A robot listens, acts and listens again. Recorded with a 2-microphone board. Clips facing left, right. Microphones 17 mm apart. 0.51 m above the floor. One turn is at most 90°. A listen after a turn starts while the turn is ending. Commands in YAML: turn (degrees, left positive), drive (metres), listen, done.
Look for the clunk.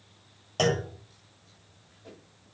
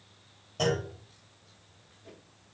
turn: 55
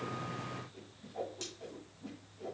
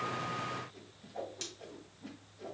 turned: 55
listen: true
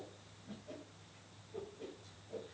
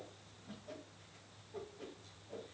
done: "I heard a clunk, but can't make it out now. It was about straight ahead or 70° left."